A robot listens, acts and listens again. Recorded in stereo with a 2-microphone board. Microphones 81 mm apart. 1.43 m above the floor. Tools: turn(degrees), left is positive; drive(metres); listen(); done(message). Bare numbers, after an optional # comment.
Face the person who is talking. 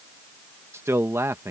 # The man speaking: about 35° right or 145° right.
turn(-35)
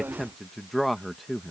done("Facing the man speaking.")